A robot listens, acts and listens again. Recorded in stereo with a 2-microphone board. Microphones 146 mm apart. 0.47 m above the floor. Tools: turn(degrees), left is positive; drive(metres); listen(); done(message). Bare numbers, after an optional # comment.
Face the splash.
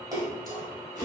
# The splash: about 25° right or 155° right.
turn(-25)
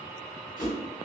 listen()
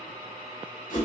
done("I heard a splash, but can't make it out now. It was about straight ahead or 130° right.")